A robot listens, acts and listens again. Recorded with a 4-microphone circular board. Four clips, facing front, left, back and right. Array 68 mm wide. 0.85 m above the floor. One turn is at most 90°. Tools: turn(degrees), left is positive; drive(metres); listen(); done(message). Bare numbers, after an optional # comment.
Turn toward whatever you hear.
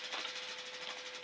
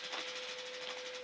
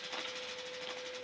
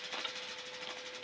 # The ticking: 60° right.
turn(-60)
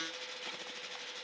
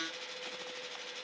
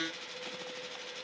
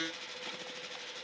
listen()
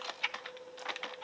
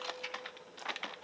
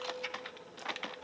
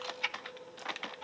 # The ticking is now 35° right.
turn(-35)
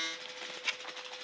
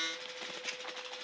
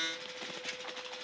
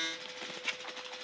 # The ticking is now 20° right.
turn(-20)
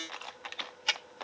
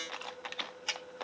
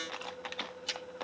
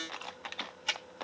done("Facing the ticking.")